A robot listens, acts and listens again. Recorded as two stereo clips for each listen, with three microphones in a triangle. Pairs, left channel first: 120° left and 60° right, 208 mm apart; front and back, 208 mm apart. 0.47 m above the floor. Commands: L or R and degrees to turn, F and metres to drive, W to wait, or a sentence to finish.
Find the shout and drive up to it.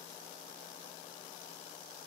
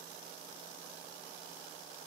W
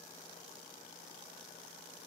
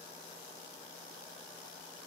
W
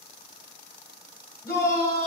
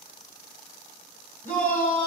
L45
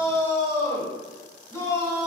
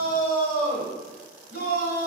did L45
F1.0
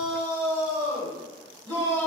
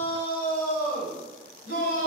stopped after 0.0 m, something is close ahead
Something is in my way. I am facing the shout but have not reached it.